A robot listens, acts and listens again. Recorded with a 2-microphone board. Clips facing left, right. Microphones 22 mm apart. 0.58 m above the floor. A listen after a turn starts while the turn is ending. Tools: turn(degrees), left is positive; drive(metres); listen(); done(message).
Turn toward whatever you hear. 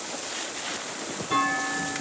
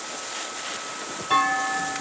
turn(degrees=-45)
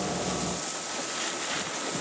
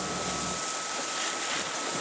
listen()
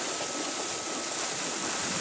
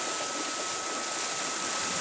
done("I heard a clunk, but can't make it out now. It was about straight ahead or 90° right.")